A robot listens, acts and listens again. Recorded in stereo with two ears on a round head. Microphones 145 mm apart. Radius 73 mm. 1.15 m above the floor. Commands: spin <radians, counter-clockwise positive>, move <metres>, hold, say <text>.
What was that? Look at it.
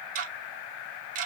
spin -0.87
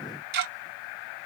spin -1.31
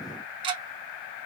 spin -0.52
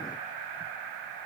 hold
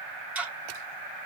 spin -0.17
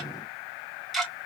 say Found it: ticking, straight ahead, under 1 m away.